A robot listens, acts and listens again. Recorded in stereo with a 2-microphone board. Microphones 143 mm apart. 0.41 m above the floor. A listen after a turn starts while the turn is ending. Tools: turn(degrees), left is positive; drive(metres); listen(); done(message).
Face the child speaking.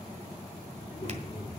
turn(degrees=25)
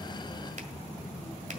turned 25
turn(degrees=135)
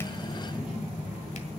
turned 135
done("Found it: a child speaking, straight ahead, over 4 m away.")